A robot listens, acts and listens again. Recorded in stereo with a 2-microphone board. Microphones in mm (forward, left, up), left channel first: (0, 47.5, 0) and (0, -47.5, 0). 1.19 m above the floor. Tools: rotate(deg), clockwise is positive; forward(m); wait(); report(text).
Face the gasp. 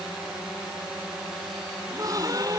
rotate(40)
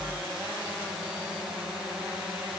wait()
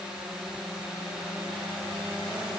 report("I heard a gasp, but can't make it out now. It was about straight ahead or 100° right.")